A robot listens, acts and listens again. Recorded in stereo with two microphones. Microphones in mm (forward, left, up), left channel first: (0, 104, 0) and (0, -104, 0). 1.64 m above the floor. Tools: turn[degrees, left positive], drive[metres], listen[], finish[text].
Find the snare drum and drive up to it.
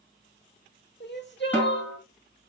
Action: turn[30]
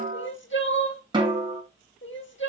Thought: So it is at 20° right.
Action: turn[-20]
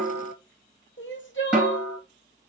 Action: drive[1.0]
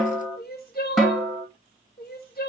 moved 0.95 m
Action: drive[1.0]
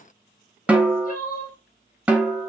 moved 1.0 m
Action: drive[1.0]
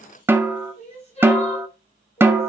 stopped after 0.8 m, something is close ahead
Thought: The snare drum is now 10° right.
Action: turn[-10]
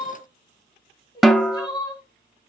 Action: finish[I am next to the snare drum.]